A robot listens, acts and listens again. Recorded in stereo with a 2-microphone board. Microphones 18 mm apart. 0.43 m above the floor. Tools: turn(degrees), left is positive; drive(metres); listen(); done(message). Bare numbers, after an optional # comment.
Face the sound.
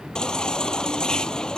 # The baby crying: about 50° left or 130° left.
turn(50)
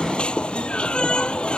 # So it is at 80° left.
turn(80)
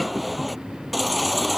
done("Found it: a baby crying, straight ahead.")